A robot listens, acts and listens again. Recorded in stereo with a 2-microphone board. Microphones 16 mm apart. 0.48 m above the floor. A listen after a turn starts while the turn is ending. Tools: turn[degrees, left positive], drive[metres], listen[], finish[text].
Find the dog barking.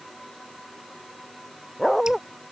Thought: The dog barking: about 15° right or 165° right.
Action: turn[-15]
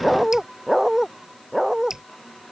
Thought: The dog barking: about 30° right or 150° right.
Action: turn[-30]
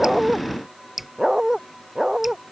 Thought: So it is at 130° right.
Action: turn[-130]
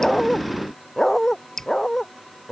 Thought: The dog barking is now 25° left.
Action: turn[25]
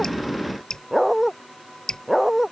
Action: finish[Facing the dog barking.]